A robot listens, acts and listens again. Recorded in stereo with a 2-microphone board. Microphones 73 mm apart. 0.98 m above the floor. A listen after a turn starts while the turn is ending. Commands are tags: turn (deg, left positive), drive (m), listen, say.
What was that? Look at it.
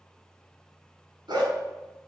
<turn deg="-90"/>
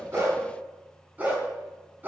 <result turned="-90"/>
<turn deg="-25"/>
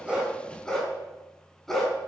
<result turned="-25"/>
<say>Facing the dog barking, over 4 m away.</say>